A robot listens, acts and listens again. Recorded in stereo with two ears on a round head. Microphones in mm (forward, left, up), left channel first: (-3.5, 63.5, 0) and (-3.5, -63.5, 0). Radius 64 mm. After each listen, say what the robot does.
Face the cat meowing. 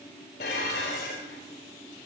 Keep listening.
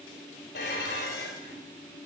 Keep listening.
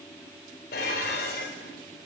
I can't make out a cat meowing, only dishes clattering.